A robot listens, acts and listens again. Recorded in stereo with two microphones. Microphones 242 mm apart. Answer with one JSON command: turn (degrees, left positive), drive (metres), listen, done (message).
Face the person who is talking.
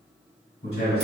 {"turn": 55}
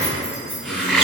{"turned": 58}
{"listen": true}
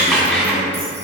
{"listen": true}
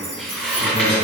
{"turn": 40}
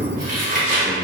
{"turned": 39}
{"done": "Facing the man speaking, 1 to 2 m away."}